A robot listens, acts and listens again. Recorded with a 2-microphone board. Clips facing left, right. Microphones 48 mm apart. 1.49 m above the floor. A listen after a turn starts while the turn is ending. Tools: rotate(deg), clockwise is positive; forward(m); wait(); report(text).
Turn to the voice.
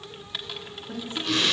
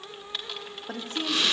rotate(90)
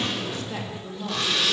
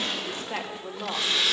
rotate(25)
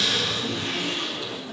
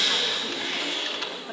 wait()
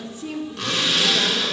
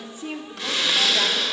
rotate(20)
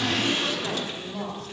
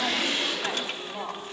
rotate(10)
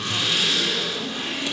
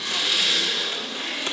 wait()
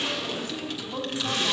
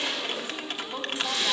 report("Found it: a woman speaking, straight ahead, 2 to 4 m away.")